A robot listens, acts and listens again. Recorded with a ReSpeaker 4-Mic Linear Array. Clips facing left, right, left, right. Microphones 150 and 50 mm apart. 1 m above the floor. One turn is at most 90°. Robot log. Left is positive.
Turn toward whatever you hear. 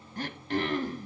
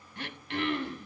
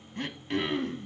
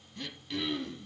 note: The throat clearing: about 40° left or 140° left.
cmd yaw +40
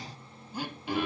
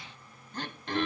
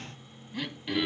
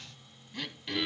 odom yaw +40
note: So it is at 10° left.
cmd yaw +10
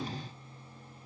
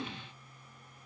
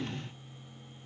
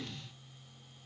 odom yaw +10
end: Facing the throat clearing.